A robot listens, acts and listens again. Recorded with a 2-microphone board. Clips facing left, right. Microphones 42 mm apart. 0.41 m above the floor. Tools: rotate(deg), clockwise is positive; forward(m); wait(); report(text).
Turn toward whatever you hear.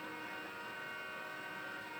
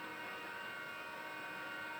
wait()
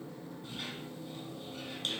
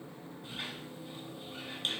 rotate(20)
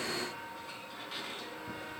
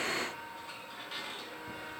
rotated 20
report("Facing the squeak, 2 to 4 m away.")